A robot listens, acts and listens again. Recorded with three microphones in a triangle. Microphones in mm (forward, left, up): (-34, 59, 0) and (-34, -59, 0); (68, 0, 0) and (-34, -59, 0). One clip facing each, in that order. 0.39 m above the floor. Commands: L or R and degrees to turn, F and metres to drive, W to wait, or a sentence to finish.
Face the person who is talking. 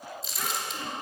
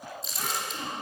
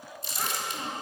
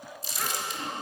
R35
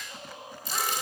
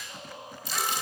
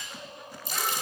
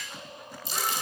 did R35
W
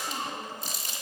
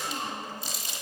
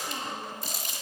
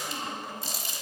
L20
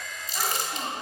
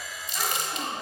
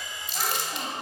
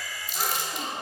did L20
Facing the child speaking, 2 to 4 m away.